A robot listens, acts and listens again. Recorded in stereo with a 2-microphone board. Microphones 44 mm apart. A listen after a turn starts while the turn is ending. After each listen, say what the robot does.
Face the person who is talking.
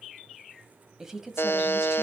Turn 30° right.
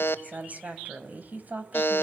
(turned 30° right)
Turn 135° right.
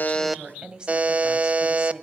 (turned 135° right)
Turn 25° right.
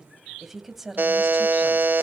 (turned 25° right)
Turn 10° right.
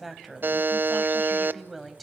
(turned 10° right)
Found it: a woman speaking, straight ahead, 2 to 4 m away.